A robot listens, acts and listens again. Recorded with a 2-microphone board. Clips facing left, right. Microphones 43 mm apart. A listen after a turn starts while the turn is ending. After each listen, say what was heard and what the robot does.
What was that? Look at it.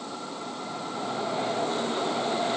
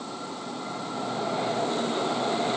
Keep listening.
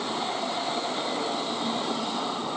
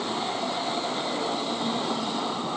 Keep listening.
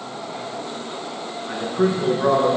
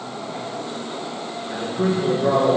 Turn 90° left.
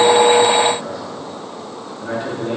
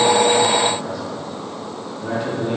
Facing the man speaking, over 4 m away.